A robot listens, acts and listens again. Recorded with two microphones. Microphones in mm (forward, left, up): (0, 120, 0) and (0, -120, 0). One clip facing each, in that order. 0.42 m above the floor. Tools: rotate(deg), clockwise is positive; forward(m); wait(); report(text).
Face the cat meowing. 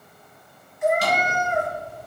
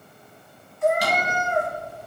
rotate(-15)
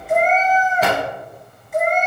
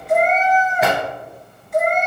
report("Found it: a cat meowing, straight ahead.")